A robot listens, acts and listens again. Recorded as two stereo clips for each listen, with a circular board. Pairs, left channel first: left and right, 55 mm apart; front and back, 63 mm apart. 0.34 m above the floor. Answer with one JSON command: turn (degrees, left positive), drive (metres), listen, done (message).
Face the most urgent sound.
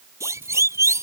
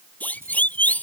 {"turn": -65}
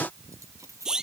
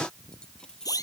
{"turn": -10}
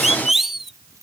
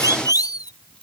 {"done": "Found it: a siren, straight ahead."}